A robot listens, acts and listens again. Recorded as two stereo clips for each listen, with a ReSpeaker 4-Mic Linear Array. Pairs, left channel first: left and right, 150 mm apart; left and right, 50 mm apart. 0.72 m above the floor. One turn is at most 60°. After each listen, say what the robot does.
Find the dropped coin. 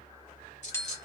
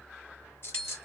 Turn 50° left.
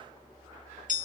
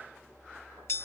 Keep listening.
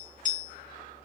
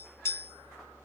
I heard a dropped coin, but can't make it out now. It was about straight ahead or 80° left.